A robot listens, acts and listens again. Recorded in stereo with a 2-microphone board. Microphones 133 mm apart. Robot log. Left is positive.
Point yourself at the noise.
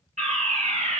note: The fire alarm: about 65° right or 115° right.
cmd yaw -65
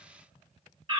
note: So it is at 45° right.
cmd yaw -45
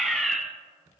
end: Facing the fire alarm, 2 to 4 m away.